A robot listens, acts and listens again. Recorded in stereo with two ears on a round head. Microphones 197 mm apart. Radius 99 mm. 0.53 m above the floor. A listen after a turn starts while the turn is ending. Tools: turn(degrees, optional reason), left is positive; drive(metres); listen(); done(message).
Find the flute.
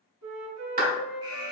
turn(degrees=-90)
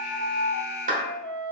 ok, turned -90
done("Found it: a flute, straight ahead.")